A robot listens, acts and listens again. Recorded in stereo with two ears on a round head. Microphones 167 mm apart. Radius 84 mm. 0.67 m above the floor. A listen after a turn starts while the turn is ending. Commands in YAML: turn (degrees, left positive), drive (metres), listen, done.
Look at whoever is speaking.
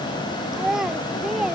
turn: 30
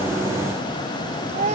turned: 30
turn: -35
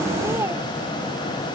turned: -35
listen: true
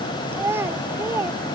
turn: -10
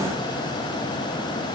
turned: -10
listen: true
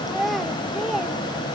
done: "Facing the child speaking."